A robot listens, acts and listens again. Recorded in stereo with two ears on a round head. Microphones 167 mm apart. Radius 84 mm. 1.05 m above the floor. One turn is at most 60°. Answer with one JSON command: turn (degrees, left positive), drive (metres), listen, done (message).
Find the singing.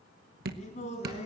{"turn": 35}
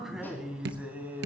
{"turn": -10}
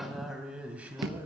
{"turn": -10}
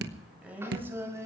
{"turn": -15}
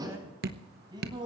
{"turn": -25}
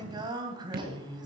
{"turn": -25}
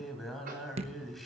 {"done": "Found it: singing, straight ahead, 2 to 4 m away."}